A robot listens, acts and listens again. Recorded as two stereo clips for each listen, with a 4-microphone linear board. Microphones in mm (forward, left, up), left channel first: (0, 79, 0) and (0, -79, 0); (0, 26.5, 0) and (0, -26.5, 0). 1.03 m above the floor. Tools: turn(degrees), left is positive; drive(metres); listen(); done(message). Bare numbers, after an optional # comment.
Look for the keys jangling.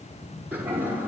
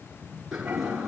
listen()
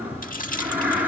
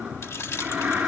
# The keys jangling: about 65° left or 115° left.
turn(65)
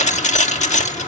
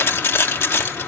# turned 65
# So it is at 50° left.
turn(50)
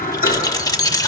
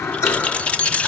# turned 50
# The keys jangling is now 25° left.
turn(25)
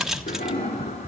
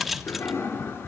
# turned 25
done("Facing the keys jangling, 1 to 2 m away.")